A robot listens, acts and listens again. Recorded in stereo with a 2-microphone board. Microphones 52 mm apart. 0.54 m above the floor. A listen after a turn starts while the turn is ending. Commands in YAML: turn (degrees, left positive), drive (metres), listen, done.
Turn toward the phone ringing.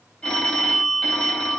turn: 20
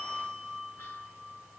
done: "Found it: a phone ringing, straight ahead, 1 to 2 m away."